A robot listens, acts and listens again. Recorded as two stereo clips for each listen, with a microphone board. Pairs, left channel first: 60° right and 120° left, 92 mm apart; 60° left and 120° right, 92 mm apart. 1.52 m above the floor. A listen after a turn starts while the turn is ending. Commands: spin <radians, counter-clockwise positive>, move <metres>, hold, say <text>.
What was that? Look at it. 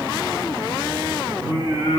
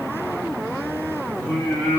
spin 2.36
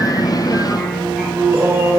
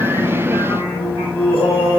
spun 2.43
spin 1.05
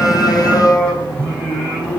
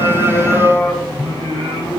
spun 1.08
spin 0.35
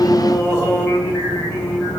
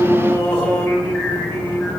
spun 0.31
say Found it: singing, straight ahead, 2 to 4 m away.